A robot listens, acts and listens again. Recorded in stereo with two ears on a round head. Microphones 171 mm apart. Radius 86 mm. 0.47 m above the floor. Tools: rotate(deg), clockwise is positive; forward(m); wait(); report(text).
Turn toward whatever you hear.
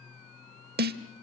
rotate(55)
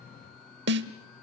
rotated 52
rotate(65)
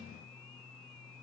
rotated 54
rotate(15)
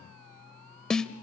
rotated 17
report("Facing the snare drum.")